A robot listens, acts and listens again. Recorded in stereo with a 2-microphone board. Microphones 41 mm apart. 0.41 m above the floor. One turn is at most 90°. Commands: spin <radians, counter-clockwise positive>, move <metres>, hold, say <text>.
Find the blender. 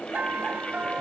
hold
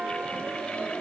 hold
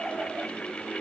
say I can't make out a blender to turn to.